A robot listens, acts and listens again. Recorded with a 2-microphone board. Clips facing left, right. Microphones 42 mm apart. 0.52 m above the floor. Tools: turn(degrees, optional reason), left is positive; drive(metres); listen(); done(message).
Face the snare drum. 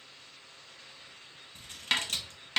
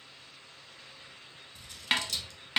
turn(degrees=-30)
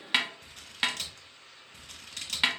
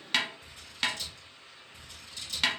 turn(degrees=15, reason="So it is at 15° left.")
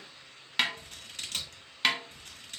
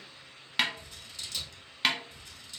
done("Facing the snare drum, under 1 m away.")